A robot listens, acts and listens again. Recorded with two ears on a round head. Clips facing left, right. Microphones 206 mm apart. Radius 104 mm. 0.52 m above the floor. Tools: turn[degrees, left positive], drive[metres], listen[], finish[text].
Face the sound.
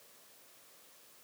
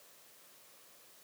Action: listen[]
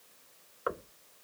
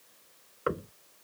Thought: The knocking: about 35° right or 145° right.
Action: turn[-35]
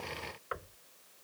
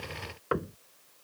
Thought: So it is at 110° right.
Action: turn[-110]
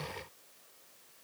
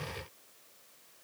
Action: listen[]
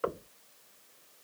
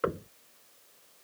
Thought: The knocking is now 25° right.
Action: turn[-25]
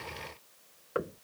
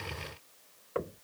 Thought: The knocking is now 15° left.
Action: turn[15]
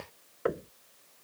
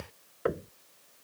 Action: finish[Found it: knocking, straight ahead.]